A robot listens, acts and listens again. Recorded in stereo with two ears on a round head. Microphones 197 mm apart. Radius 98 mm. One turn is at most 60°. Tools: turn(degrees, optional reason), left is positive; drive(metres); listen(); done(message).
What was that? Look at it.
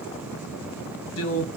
turn(degrees=60, reason="The man speaking: about 75° left or 105° left.")
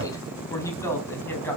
turn(degrees=10, reason="So it is at 10° left.")
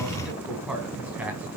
done("Found it: a man speaking, straight ahead, over 4 m away.")